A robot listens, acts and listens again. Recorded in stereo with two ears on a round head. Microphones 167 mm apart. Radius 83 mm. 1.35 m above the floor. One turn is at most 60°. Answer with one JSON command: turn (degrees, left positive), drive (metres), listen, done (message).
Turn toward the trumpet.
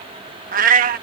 {"listen": true}
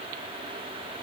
{"listen": true}
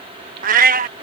{"done": "I can't make out a trumpet to turn to."}